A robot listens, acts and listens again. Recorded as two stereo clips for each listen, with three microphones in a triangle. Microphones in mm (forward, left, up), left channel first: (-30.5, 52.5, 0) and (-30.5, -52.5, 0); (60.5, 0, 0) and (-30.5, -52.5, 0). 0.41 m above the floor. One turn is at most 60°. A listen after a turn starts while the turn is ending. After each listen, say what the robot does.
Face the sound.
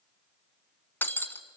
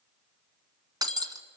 Turn 60° left.
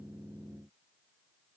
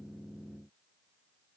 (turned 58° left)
Turn 60° left.
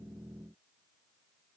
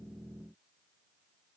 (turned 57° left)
Turn 45° left.
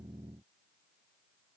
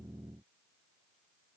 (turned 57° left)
Turn 10° right.
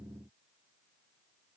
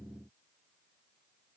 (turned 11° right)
Facing where the breaking glass came from. I can't hear it now.